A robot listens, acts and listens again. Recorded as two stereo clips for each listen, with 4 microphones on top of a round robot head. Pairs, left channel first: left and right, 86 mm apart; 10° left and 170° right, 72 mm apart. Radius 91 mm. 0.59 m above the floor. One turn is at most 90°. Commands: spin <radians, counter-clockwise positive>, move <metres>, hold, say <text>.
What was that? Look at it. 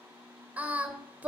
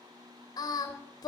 spin -0.35
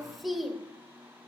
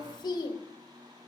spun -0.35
say Facing the singing.